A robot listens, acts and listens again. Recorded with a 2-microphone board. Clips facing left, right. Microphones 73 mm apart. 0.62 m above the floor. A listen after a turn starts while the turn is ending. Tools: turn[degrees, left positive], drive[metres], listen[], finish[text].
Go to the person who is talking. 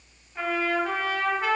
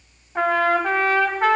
Action: listen[]
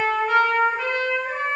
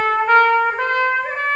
Action: listen[]
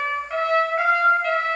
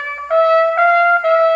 Action: finish[I can't make out anyone speaking to turn to.]